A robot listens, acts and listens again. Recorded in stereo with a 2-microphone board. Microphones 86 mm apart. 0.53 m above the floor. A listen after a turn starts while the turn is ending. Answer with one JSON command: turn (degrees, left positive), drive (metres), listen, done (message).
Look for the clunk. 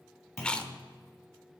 {"turn": 35}
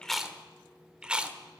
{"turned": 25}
{"listen": true}
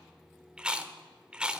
{"done": "I heard a clunk, but can't make it out now. It was about 10° left or 120° left."}